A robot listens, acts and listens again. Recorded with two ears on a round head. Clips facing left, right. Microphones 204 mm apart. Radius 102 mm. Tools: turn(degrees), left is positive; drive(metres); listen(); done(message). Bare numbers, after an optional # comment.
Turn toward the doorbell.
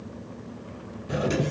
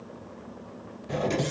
turn(30)
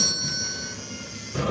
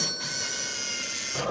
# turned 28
# So it is at 140° left.
turn(140)
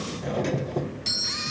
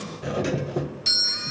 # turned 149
# The doorbell is now 10° right.
turn(-10)
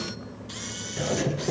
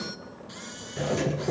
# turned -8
done("Facing the doorbell.")